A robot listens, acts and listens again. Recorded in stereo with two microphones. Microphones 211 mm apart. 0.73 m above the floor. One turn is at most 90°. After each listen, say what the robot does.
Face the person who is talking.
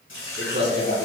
Turn 60° right.
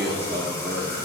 Turn 55° right.
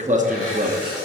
Turn 45° right.
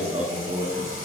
Turn 45° right.
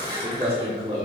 Turn 30° right.
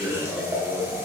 Found it: a man speaking, straight ahead, 1 to 2 m away.